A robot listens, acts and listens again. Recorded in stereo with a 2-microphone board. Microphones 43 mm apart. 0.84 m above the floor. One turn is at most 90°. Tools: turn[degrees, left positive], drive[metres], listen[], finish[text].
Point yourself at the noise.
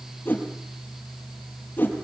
Thought: The whoosh: about 50° left or 130° left.
Action: turn[50]
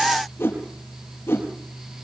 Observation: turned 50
Thought: So it is at 75° left.
Action: turn[75]
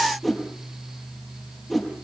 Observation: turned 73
Action: finish[Facing the whoosh, over 4 m away.]